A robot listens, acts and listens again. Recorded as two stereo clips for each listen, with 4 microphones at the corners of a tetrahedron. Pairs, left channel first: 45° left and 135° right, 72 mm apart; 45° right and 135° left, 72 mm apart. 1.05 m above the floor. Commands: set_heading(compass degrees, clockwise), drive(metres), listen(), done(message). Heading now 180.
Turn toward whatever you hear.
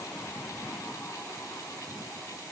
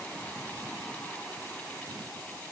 listen()
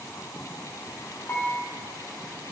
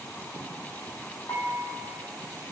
set_heading(200)
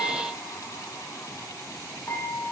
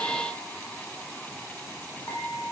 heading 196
done("Facing the dishes clattering.")